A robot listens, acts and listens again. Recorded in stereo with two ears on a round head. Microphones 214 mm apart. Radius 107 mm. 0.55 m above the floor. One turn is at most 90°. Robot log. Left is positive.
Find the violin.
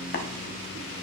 cmd idle
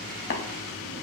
cmd idle
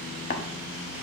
end: I can't make out a violin, only tapping.